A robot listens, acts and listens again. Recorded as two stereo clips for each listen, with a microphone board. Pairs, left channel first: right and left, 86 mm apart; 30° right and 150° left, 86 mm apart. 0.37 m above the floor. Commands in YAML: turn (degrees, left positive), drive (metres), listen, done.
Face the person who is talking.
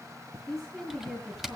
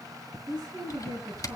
turn: 180
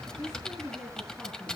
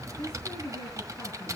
done: "Found it: a woman speaking, straight ahead, over 4 m away."